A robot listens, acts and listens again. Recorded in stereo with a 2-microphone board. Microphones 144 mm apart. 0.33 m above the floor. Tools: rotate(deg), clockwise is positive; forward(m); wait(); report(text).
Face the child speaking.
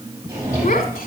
rotate(-75)
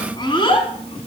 rotate(-40)
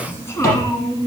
rotate(-25)
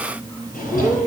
rotate(-20)
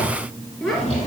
report("Facing the child speaking, 2 to 4 m away.")